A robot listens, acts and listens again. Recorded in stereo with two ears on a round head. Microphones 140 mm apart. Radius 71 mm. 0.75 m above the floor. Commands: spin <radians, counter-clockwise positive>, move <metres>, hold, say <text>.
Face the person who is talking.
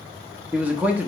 spin -0.52
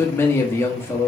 spin 0.35
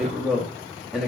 say Found it: a man speaking, straight ahead.